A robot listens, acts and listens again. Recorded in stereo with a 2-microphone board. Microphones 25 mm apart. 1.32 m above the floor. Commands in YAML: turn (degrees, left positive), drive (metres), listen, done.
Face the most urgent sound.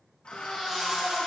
turn: -25
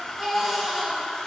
done: "Facing the baby crying."